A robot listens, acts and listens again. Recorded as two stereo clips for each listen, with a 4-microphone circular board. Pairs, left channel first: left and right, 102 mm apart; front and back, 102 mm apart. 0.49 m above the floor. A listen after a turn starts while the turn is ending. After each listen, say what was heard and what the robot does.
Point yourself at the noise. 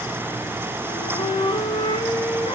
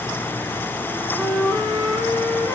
The flute: 110° left. Turn 110° left.
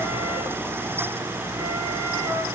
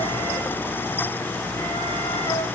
Keep listening.
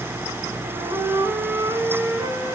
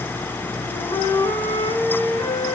The flute is now 25° right. Turn 25° right.
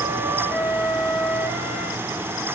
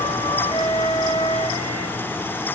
The flute is now 10° left. Turn 10° left.
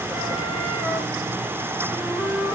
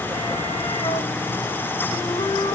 Found it: a flute, straight ahead.